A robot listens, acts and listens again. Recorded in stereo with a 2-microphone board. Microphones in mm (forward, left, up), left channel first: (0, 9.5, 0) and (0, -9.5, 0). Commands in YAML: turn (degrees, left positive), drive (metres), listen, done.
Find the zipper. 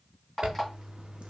turn: -55
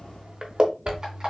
turn: -65
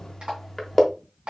turn: 15
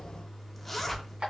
done: "Found it: a zipper, straight ahead."